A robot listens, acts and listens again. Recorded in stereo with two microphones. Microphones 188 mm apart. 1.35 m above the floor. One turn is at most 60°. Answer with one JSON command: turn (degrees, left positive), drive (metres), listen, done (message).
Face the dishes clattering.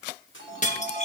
{"turn": 40}
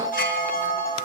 {"listen": true}
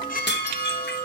{"turn": 60}
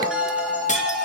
{"turn": 35}
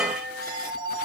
{"listen": true}
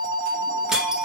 {"done": "I heard dishes clattering from this way, but can't make it out now."}